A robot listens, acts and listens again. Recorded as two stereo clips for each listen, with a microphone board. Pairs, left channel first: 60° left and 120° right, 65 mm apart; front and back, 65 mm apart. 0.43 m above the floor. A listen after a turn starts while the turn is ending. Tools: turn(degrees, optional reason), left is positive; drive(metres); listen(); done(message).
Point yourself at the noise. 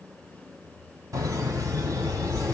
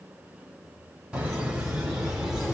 turn(degrees=-95, reason="The laughter: 95° right.")
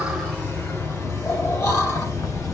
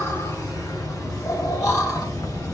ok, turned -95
turn(degrees=25, reason="The laughter is now 25° left.")
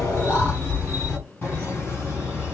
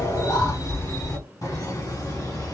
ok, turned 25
done("Facing the laughter, 2 to 4 m away.")